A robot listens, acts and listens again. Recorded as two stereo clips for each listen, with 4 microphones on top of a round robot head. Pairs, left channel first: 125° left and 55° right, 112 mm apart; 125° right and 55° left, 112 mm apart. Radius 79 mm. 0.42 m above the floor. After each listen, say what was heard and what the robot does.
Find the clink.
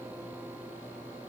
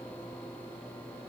Keep listening.
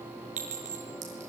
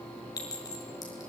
The clink: 65° right. Turn 65° right.
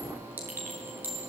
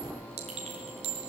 The clink is now 20° left. Turn 20° left.
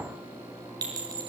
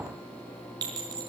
Found it: a clink, straight ahead.